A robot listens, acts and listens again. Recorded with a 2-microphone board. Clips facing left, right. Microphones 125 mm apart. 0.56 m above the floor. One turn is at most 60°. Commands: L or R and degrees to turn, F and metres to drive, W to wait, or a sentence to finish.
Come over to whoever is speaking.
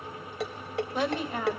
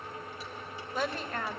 L30
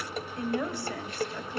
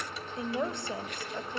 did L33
R20
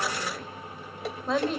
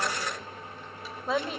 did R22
F1.0
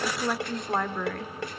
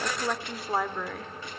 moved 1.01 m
F1.0
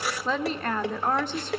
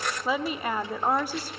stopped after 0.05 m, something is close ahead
R10
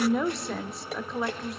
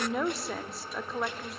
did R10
I am next to the woman speaking.